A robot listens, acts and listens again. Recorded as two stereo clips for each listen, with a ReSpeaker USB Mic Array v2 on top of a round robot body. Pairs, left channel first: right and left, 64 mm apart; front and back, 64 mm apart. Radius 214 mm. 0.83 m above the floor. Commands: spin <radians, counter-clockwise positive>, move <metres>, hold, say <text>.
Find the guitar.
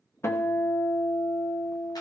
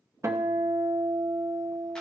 spin -2.36
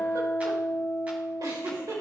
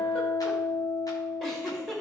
spin -0.52
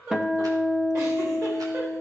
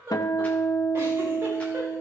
spin 0.26
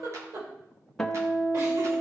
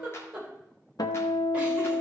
say Found it: a guitar, straight ahead, 1 to 2 m away.